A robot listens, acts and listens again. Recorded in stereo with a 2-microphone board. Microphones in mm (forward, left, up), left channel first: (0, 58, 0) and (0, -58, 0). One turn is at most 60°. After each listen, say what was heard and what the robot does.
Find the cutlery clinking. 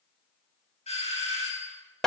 Keep listening.
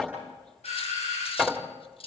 The cutlery clinking: about 55° left or 125° left. Turn 55° left.
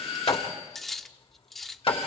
Found it: cutlery clinking, straight ahead, under 1 m away.